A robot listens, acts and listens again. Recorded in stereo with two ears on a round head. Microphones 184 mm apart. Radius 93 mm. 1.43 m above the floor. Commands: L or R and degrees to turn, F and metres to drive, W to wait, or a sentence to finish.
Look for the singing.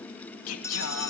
L90
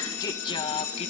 L30
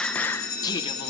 L20
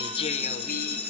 L45
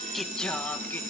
L10
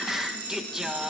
Found it: singing, straight ahead, 1 to 2 m away.